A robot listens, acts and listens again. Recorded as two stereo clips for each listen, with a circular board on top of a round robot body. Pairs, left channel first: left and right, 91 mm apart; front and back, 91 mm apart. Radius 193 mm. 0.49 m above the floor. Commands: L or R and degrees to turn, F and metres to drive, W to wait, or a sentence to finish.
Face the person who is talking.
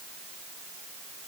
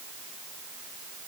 W
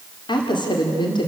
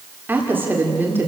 L115
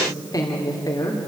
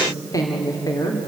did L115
L45
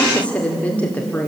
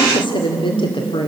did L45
L15
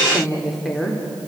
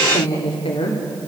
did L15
Facing the woman speaking, 2 to 4 m away.